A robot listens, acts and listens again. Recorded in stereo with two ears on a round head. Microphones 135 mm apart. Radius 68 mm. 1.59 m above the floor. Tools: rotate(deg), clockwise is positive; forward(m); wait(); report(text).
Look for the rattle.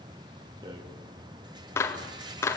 rotate(30)
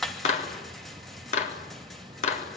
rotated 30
report("Facing the rattle, 2 to 4 m away.")